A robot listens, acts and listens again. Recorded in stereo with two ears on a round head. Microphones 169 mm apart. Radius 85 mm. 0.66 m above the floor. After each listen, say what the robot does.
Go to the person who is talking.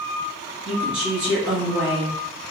Turn 70° right.
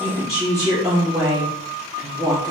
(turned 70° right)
Drive 1.0 m forward.
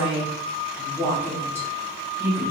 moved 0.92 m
Turn 15° right.
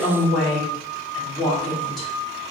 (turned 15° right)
Drive 1.0 m forward.
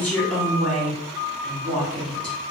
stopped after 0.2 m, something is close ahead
Arrived at the woman speaking, straight ahead.